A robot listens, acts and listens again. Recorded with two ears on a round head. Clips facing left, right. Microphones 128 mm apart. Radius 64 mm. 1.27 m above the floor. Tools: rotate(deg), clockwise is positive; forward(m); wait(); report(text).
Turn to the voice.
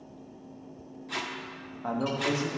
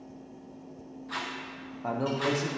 rotate(30)
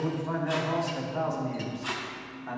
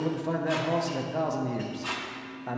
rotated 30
rotate(140)
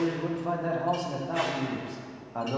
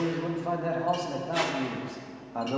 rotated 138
report("Found it: a man speaking, straight ahead.")